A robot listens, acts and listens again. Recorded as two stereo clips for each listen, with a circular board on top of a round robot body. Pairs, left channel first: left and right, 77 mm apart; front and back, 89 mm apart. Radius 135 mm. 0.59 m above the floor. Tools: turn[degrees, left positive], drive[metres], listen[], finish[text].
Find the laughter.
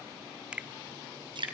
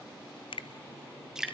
Action: listen[]
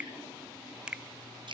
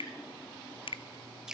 Action: listen[]
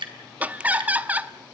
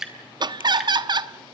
Thought: The laughter: 160° right.
Action: turn[-160]
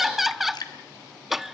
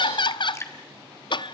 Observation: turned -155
Action: finish[Facing the laughter, 1 to 2 m away.]